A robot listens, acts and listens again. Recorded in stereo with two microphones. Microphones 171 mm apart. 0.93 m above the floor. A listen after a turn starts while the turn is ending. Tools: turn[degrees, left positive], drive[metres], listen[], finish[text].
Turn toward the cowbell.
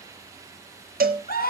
Thought: The cowbell: about 65° right or 115° right.
Action: turn[-65]
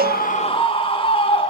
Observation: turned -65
Action: listen[]
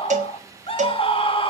Thought: So it is at 50° right.
Action: turn[-50]
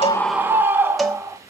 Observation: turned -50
Action: finish[Facing the cowbell, 1 to 2 m away.]